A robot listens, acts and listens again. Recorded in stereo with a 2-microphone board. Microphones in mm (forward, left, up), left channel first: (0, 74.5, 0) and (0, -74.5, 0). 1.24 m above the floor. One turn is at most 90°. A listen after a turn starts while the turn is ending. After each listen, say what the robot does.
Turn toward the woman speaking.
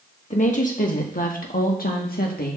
Turn 90° left.
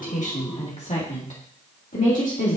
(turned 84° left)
Turn 60° left.
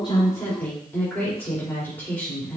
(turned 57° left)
Turn 15° left.
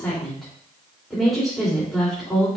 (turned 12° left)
Facing the woman speaking, 2 to 4 m away.